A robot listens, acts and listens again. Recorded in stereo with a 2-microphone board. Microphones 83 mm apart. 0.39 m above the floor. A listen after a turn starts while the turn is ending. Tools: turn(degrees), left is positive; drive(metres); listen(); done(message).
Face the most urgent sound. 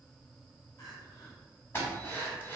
turn(degrees=45)
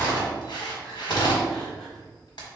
listen()
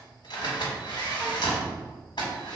listen()
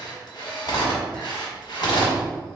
done("I heard crying, but can't make it out now. It was about straight ahead or 90° left.")